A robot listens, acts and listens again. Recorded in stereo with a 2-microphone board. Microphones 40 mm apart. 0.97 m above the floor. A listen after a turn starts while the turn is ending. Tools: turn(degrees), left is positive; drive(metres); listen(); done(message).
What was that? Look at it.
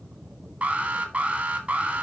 turn(degrees=-30)
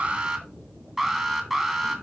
done("Facing the alarm.")